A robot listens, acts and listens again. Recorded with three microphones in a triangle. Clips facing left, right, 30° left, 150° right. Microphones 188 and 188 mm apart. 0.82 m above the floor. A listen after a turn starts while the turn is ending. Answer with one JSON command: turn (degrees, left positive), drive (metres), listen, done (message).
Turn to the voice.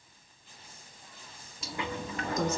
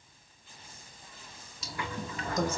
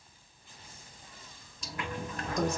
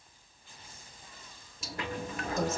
{"turn": -65}
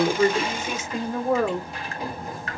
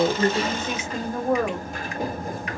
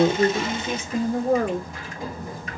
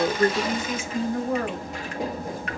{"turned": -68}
{"turn": 15}
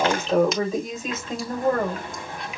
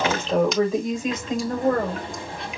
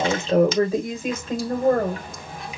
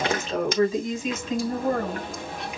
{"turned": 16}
{"done": "Facing the woman speaking."}